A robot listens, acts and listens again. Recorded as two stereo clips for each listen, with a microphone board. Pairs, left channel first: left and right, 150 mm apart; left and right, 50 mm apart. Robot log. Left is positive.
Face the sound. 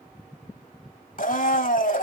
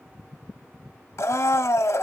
note: The blender: about 65° left or 115° left.
cmd yaw +65
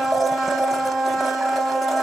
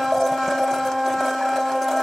end: Facing the blender, under 1 m away.